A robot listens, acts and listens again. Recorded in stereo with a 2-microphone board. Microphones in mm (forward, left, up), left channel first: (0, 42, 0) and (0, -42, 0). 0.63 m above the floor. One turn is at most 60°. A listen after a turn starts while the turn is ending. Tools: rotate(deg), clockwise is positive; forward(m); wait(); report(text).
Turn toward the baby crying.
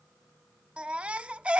rotate(30)
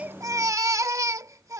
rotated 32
rotate(60)
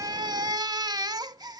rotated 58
rotate(60)
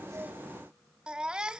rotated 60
rotate(10)
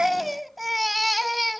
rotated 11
report("Facing the baby crying.")